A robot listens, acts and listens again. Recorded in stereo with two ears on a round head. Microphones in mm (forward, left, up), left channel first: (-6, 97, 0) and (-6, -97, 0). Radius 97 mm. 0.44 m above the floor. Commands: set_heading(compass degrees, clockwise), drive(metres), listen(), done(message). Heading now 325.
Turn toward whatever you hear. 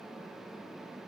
listen()
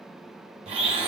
set_heading(355)
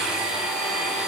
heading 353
done("Facing the blender, 1 to 2 m away.")